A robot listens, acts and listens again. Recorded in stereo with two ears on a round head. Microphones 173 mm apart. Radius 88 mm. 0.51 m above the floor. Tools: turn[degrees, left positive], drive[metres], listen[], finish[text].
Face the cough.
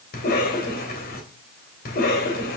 Thought: The cough: about 50° left or 130° left.
Action: turn[50]
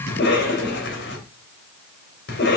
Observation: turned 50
Thought: So it is at 70° left.
Action: turn[70]
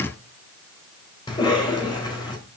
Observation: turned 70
Thought: The cough is now 25° left.
Action: turn[25]
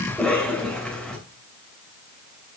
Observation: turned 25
Action: finish[Found it: a cough, straight ahead, 2 to 4 m away.]